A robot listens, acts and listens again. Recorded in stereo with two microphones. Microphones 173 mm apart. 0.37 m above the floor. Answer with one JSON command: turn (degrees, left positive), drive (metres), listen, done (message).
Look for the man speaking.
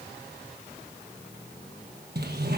{"listen": true}
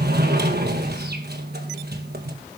{"listen": true}
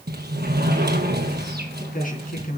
{"turn": 55}
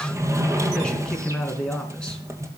{"done": "Found it: a man speaking, straight ahead."}